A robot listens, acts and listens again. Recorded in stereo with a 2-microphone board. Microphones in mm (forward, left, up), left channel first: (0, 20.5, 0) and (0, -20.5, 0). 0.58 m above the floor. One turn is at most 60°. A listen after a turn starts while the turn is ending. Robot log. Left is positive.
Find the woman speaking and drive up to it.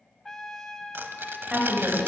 note: The woman speaking: about 30° right or 150° right.
cmd yaw -30
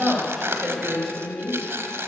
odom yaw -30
cmd fwd 1.0
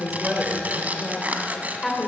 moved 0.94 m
cmd fwd 1.0
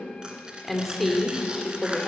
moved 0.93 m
cmd fwd 1.0
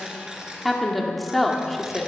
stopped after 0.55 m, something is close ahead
end: Arrived at the woman speaking, straight ahead.